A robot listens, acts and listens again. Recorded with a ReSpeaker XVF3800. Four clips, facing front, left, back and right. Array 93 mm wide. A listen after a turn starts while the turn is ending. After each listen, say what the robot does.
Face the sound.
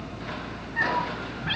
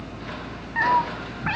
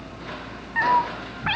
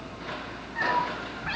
Turn 150° left.
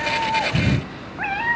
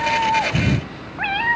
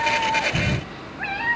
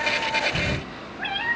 Turn 65° left.
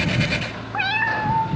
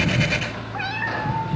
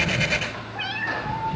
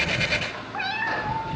Turn 10° left.
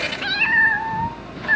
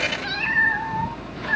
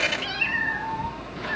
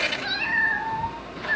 Turn 10° left.
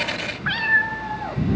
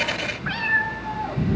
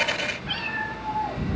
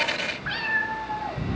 Turn 10° left.
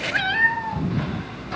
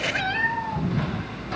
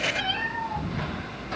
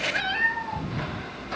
Facing the cat meowing, 2 to 4 m away.